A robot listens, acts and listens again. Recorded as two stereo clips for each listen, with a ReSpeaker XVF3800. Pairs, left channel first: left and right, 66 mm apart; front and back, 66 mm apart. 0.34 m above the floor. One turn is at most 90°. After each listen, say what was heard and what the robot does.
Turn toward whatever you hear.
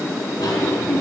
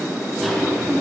The cough: 90° left. Turn 90° left.
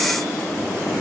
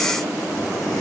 Keep listening.
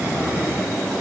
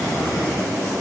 The cough is now 25° right. Turn 25° right.
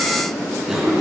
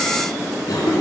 The cough is now 10° right. Turn 10° right.
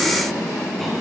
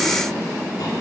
Keep listening.
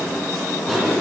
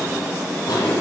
Found it: a cough, straight ahead.